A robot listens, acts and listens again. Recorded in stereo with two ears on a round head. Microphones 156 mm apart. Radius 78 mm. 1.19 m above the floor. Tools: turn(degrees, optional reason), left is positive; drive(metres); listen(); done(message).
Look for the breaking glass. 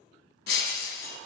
turn(degrees=65, reason="The breaking glass: about 65° left or 115° left.")
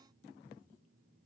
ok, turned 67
listen()
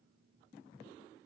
done("I heard breaking glass, but can't make it out now. It was about straight ahead or 50° left.")